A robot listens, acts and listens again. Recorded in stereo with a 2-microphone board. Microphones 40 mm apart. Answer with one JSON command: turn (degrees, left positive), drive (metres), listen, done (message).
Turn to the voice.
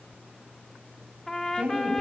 {"turn": -30}
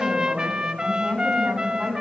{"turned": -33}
{"done": "Found it: a woman speaking, straight ahead."}